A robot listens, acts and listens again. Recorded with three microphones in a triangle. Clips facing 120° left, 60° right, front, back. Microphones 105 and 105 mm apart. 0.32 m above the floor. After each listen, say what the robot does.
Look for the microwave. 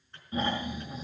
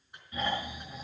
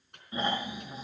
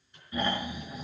Turn 15° left.
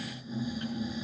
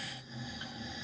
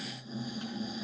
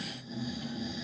Keep listening.
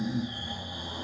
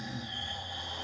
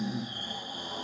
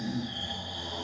Keep listening.
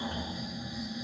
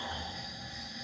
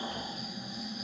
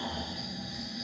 Facing where the microwave came from. I can't hear it now.